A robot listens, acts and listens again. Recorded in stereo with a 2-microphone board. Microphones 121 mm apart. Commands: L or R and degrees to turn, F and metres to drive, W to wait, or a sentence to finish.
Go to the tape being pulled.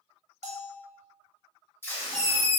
L20
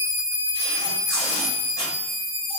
L140
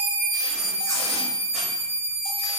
W
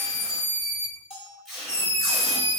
F1.0
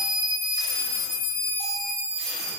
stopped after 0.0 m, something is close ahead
W
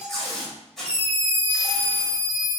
Blocked. The tape being pulled is further on, straight ahead.